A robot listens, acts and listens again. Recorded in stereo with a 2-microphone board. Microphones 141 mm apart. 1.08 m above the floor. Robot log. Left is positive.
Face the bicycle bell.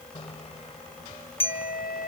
note: The bicycle bell: about 40° left or 140° left.
cmd yaw +40
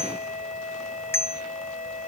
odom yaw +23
note: So it is at 15° left.
cmd yaw +15
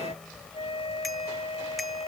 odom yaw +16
cmd idle
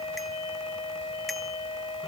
cmd idle
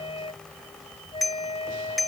end: Facing the bicycle bell.